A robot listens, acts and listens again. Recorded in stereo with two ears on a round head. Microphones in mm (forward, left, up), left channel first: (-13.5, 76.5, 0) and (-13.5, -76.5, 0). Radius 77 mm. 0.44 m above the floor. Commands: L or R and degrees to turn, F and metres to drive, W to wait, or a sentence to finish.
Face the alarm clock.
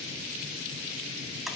W
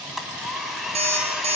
R40
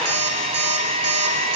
R100
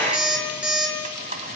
Facing the alarm clock.